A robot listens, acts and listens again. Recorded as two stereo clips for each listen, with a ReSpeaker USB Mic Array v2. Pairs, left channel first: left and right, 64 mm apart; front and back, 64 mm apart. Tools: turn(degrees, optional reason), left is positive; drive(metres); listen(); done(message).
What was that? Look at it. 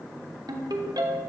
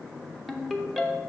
turn(degrees=-85, reason="The ringtone: 85° right.")
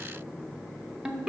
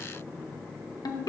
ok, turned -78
turn(degrees=-10, reason="The ringtone is now 10° right.")
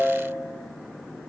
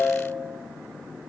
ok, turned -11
done("Found it: a ringtone, straight ahead.")